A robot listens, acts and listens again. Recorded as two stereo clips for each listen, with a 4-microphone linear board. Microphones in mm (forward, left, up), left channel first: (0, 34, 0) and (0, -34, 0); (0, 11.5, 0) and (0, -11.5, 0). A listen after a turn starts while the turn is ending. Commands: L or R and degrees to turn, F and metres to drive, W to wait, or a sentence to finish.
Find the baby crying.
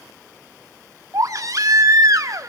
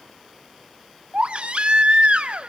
R55
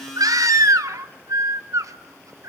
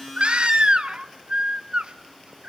R60
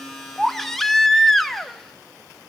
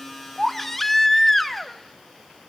Facing the baby crying.